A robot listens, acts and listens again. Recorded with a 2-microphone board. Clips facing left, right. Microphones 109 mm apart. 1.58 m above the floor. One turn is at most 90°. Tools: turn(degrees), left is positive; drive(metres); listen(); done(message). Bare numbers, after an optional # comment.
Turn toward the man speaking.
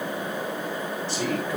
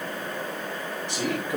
# The man speaking: about 15° right or 165° right.
turn(-15)
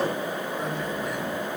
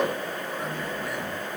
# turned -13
turn(-30)
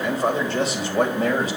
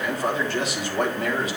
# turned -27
# So it is at 35° left.
turn(35)
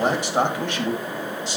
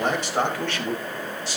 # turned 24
# The man speaking is now 20° left.
turn(20)
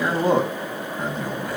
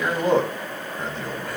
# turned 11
# The man speaking is now 10° left.
turn(10)
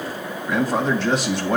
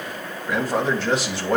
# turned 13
done("Found it: a man speaking, straight ahead.")